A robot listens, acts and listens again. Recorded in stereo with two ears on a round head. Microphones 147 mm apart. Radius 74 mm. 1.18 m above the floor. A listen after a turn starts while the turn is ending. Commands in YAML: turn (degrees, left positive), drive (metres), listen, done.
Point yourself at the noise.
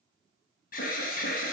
turn: 60
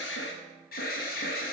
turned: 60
turn: 60
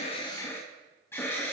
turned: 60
turn: 15
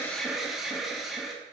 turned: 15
done: "Found it: an alarm, straight ahead."